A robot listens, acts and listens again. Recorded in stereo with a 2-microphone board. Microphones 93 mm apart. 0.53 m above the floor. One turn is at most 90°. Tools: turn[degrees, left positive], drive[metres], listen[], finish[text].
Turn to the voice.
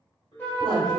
Thought: The woman speaking: about 50° right or 130° right.
Action: turn[-50]
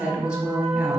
Thought: So it is at 10° right.
Action: turn[-10]
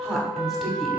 Action: finish[Found it: a woman speaking, straight ahead, 1 to 2 m away.]